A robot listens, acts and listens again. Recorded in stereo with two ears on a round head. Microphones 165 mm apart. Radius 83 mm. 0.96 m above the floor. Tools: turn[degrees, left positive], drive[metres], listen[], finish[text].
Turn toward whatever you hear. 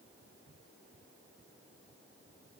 Action: listen[]
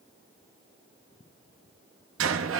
Action: turn[-90]
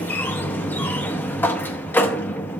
Thought: So it is at 10° left.
Action: turn[10]
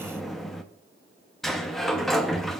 Action: finish[Found it: a sliding door, straight ahead, under 1 m away.]